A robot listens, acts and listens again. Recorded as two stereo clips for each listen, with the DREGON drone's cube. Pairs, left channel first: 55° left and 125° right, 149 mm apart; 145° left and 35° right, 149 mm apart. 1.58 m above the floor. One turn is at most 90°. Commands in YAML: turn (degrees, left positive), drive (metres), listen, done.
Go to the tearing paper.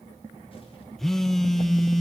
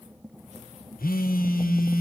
listen: true
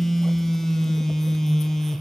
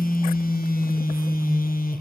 listen: true
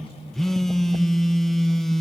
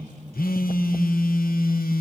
done: "I can't make out tearing paper to turn to."